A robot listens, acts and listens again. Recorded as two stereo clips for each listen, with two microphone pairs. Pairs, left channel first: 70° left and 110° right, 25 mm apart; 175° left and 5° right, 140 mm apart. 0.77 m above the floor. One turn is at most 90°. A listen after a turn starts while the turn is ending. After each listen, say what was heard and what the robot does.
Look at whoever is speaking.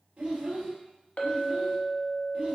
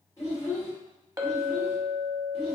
The child speaking: 115° right. Turn 90° right.
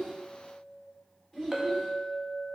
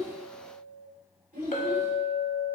The child speaking is now 15° right. Turn 15° right.
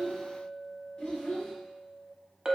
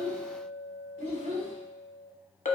Found it: a child speaking, straight ahead.